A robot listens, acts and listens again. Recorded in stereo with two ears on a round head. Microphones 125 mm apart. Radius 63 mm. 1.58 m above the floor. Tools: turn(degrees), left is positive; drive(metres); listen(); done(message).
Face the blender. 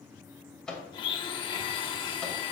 turn(degrees=35)
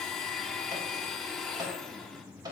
done("Found it: a blender, straight ahead, under 1 m away.")